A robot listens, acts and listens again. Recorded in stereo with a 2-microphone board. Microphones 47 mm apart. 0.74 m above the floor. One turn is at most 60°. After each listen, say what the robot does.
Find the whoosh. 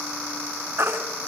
Keep listening.
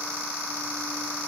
Keep listening.
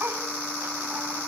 I can't make out a whoosh to turn to.